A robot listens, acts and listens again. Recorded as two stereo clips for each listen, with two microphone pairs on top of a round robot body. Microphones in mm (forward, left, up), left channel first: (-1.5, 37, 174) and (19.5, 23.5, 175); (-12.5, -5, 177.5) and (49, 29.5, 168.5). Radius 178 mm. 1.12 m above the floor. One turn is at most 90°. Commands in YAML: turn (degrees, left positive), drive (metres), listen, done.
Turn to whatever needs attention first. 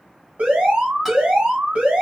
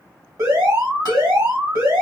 turn: -25
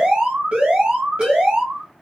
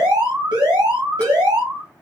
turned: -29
done: "Facing the alarm, 1 to 2 m away."